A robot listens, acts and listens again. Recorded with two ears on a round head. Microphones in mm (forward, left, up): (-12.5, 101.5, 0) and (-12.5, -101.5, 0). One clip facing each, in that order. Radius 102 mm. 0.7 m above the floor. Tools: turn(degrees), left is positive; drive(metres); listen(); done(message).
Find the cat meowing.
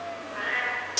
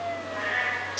turn(degrees=25)
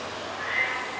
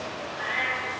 done("Found it: a cat meowing, straight ahead, 2 to 4 m away.")